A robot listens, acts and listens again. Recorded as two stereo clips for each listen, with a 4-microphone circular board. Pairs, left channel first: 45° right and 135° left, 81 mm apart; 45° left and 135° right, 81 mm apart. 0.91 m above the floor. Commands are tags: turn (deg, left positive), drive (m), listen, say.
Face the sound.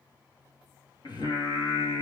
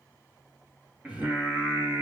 <turn deg="-65"/>
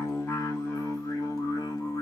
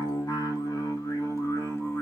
<turn deg="-10"/>
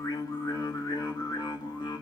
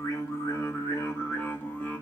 <turn deg="-25"/>
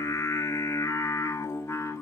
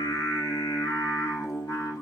<turn deg="10"/>
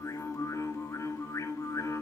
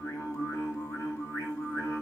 <say>Found it: singing, straight ahead, 2 to 4 m away.</say>